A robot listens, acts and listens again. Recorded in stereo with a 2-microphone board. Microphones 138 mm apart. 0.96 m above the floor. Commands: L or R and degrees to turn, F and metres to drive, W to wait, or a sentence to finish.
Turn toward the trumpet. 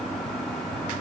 W
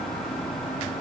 W
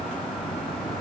I can't make out a trumpet to turn to.